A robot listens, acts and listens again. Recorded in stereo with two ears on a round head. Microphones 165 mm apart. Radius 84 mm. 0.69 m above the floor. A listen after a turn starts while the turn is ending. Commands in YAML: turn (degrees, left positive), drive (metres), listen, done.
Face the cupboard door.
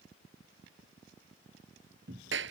turn: -70
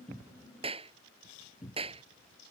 done: "Facing the cupboard door."